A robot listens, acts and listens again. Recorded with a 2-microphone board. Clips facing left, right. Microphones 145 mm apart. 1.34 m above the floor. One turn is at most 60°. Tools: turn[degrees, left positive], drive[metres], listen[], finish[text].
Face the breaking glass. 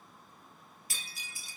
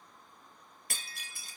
Thought: The breaking glass: about 60° right or 120° right.
Action: turn[-60]
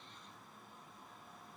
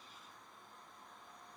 Action: listen[]
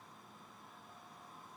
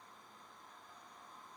Action: finish[I heard breaking glass, but can't make it out now. It was about straight ahead or 60° right.]